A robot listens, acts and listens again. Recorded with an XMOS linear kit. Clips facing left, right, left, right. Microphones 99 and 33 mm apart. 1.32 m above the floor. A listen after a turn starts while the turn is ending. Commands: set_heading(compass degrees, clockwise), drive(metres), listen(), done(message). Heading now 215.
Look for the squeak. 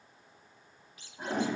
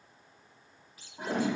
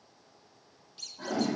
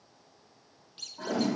set_heading(250)
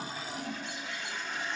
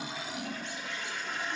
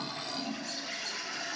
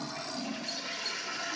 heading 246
listen()
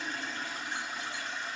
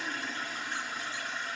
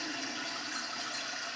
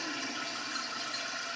listen()
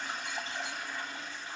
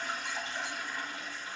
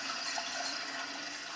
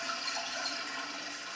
done("I heard a squeak, but can't make it out now. It was about 5° right or 115° right.")